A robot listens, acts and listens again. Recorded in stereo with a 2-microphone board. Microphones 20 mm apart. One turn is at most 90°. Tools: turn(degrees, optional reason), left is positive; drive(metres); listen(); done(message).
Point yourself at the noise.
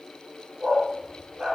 turn(degrees=-25, reason="The dog barking: about 25° right or 155° right.")
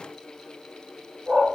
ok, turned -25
turn(degrees=-90, reason="So it is at 130° right.")
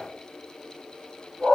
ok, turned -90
turn(degrees=-60, reason="The dog barking is now 60° right.")
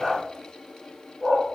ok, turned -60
done("Facing the dog barking, 2 to 4 m away.")